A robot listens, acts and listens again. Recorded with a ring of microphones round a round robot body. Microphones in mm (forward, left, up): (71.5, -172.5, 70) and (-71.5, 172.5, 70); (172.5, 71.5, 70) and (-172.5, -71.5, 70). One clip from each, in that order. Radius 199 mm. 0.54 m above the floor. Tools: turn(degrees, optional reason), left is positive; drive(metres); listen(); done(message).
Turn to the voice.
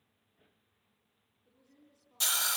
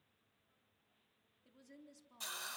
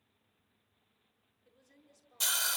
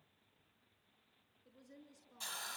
turn(degrees=115, reason="The woman speaking: 115° left.")
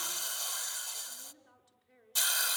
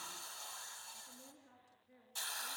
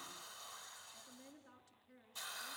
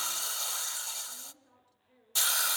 turn(degrees=10, reason="The woman speaking is now 10° left.")
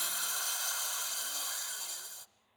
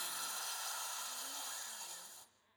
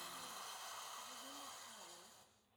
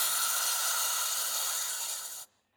listen()
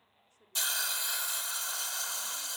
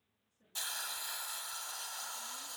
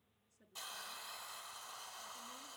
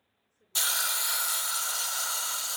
listen()
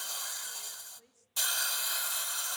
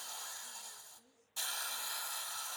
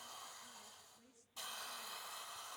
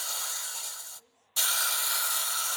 done("Facing the woman speaking, over 4 m away.")